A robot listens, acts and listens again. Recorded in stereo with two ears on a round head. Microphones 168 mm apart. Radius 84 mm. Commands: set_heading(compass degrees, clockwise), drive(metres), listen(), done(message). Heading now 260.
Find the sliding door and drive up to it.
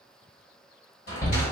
set_heading(200)
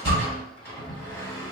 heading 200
set_heading(185)
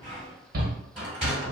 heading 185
drive(1.0)
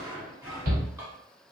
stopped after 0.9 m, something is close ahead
set_heading(200)
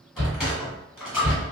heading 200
done("I am next to the sliding door.")